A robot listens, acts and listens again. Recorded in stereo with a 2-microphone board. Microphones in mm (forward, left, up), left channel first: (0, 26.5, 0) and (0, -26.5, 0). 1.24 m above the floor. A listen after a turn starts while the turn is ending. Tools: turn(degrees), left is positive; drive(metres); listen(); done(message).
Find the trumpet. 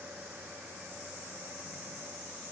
listen()
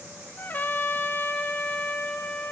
turn(degrees=35)
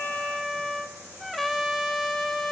done("Facing the trumpet, 2 to 4 m away.")